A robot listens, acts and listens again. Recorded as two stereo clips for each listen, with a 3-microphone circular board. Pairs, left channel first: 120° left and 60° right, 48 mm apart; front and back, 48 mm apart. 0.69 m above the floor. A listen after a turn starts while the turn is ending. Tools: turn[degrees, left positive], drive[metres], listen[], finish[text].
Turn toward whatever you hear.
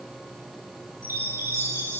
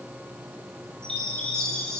Thought: The chime: 75° right.
Action: turn[-75]
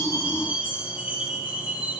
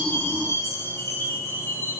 Action: finish[Facing the chime, over 4 m away.]